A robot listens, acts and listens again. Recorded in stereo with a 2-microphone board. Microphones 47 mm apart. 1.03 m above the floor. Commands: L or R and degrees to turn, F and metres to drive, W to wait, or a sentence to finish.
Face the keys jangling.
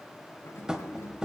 L70
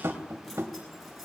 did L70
Facing the keys jangling.